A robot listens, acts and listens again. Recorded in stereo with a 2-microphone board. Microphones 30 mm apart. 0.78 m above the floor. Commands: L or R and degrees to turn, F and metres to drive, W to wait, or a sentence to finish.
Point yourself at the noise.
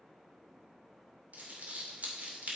R55
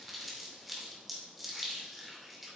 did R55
Facing the crumpling.